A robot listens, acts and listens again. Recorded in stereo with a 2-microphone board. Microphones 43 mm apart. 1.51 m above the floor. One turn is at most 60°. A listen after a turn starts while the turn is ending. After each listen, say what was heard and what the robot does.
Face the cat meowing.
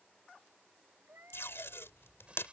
The cat meowing: about 65° right or 115° right. Turn 60° right.
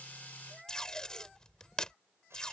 So it is at 10° right. Turn 10° right.
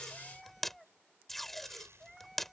Found it: a cat meowing, straight ahead.